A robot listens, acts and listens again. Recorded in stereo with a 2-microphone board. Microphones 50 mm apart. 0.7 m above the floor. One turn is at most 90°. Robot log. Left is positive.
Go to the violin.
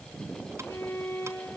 cmd yaw +90
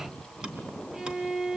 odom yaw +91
note: So it is at 10° right.
cmd yaw -10
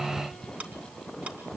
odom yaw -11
cmd idle
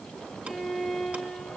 cmd fwd 1.0
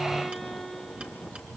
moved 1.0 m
cmd fwd 1.0
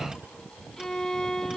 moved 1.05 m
note: The violin is now 10° left.
cmd yaw +10
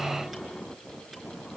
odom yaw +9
cmd idle
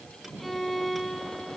cmd fwd 1.0
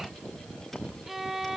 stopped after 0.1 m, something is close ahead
end: Arrived at the violin, straight ahead.